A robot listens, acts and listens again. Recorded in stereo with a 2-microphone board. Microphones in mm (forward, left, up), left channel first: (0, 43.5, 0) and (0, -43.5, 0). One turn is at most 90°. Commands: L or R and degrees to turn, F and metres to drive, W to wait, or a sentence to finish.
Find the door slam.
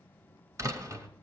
R40
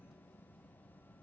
W
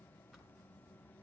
I heard a door slam, but can't make it out now. It was about straight ahead or 100° right.